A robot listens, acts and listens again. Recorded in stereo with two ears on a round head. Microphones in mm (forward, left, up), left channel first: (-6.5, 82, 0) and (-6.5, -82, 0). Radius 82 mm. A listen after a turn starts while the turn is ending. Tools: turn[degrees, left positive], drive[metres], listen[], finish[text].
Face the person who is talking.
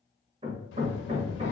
Thought: The child speaking: about 60° left or 120° left.
Action: turn[60]
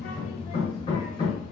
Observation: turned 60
Thought: So it is at 25° left.
Action: turn[25]
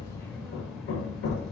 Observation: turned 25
Action: finish[Facing the child speaking, under 1 m away.]